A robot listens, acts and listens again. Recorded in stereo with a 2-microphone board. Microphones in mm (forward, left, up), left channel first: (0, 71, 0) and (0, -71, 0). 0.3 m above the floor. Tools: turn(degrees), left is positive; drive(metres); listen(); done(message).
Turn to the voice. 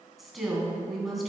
turn(degrees=30)
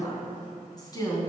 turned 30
turn(degrees=150)
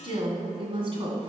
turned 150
turn(degrees=-40)
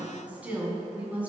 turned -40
turn(degrees=-10)
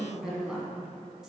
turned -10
done("Facing the woman speaking.")